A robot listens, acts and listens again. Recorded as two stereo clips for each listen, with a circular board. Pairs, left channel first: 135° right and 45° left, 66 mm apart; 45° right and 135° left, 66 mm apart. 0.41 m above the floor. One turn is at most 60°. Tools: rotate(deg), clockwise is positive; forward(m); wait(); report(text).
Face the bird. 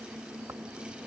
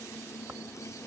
wait()
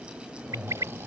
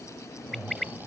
rotate(-40)
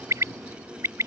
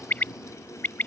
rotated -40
rotate(-15)
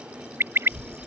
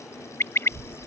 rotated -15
report("Facing the bird.")